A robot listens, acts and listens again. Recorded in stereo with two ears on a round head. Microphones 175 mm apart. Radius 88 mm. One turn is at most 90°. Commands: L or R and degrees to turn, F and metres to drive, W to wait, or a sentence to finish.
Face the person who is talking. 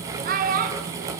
R45
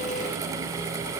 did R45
W
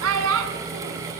R90
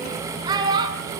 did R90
R20
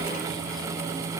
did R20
W
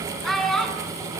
Found it: a child speaking, straight ahead, over 4 m away.